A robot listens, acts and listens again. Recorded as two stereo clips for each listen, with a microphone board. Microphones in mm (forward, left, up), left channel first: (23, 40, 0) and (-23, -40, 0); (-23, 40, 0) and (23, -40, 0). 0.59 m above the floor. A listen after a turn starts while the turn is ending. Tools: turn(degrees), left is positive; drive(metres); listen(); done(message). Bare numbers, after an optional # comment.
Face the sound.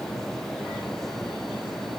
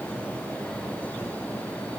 listen()
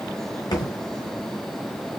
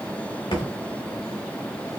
# The thud: 95° left.
turn(95)
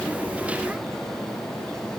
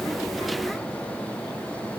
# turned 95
done("Facing where the thud came from. I can't hear it now.")